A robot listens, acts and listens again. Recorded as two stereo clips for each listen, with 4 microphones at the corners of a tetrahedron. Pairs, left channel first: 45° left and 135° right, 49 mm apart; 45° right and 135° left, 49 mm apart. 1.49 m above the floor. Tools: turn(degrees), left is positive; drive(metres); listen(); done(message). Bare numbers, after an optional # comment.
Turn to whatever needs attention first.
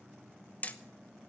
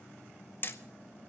listen()
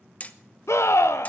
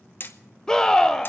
# The scream: 35° left.
turn(35)
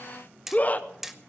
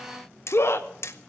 # The scream is now 15° right.
turn(-15)
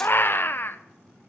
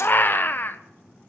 done("Found it: a scream, straight ahead.")